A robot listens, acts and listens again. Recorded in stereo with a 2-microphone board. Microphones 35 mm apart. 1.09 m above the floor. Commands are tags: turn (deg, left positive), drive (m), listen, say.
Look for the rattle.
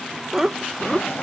<listen/>
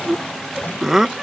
<listen/>
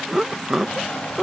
<say>I can't make out a rattle, only laughter.</say>